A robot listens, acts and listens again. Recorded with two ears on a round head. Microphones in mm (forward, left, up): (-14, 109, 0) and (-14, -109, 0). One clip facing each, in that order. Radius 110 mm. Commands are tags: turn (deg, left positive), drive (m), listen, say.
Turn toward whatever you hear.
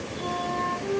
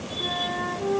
<turn deg="-55"/>
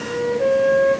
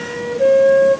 <turn deg="-35"/>
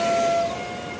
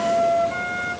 <turn deg="-15"/>
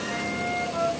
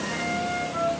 <say>Found it: a flute, straight ahead, 1 to 2 m away.</say>